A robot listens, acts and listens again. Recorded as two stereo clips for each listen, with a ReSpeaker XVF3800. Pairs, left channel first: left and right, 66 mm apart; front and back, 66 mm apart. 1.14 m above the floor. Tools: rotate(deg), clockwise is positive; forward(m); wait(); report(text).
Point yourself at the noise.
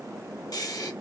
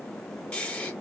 rotate(-75)
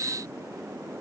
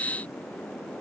wait()
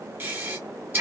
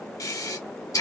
rotate(25)
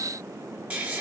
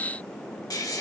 rotate(20)
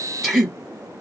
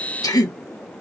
report("Facing the breathing.")